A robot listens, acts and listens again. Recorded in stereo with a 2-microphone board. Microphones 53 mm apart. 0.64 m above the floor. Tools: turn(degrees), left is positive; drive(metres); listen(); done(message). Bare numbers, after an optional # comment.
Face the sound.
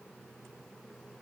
listen()
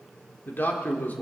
# The man speaking: about 35° left or 145° left.
turn(35)
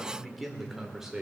# So it is at 10° right.
turn(-10)
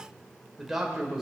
# The man speaking is now 10° right.
turn(-10)
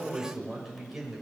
done("Facing the man speaking, 2 to 4 m away.")